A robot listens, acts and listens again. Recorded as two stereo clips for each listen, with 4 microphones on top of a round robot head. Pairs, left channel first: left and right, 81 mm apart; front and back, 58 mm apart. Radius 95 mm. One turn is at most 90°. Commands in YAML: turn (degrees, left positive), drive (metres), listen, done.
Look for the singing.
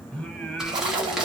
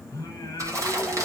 turn: 10
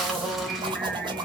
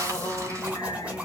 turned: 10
done: "Found it: singing, straight ahead."